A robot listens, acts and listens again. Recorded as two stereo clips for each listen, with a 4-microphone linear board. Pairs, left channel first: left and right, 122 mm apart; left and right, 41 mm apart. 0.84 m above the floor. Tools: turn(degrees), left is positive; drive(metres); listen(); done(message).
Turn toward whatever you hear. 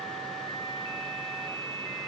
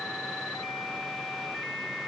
listen()
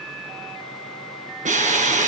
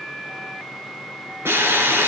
turn(degrees=-70)
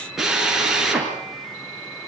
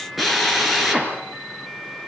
done("Found it: a drill, straight ahead, over 4 m away.")